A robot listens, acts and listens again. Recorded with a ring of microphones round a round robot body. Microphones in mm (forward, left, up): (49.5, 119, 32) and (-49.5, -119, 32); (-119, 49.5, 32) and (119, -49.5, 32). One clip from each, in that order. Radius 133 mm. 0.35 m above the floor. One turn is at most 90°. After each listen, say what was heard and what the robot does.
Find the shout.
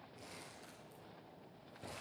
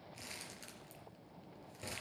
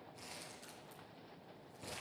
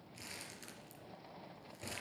Keep listening.
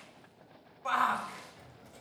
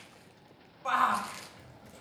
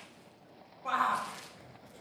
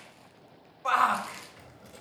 The shout: 25° right. Turn 25° right.
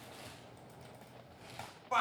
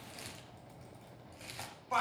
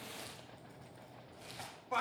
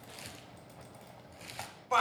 The shout is now 10° right. Turn 10° right.
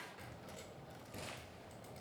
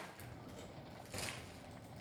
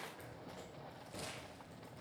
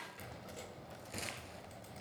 Keep listening.
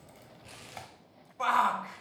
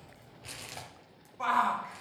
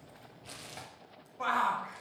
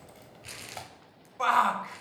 Facing the shout, 1 to 2 m away.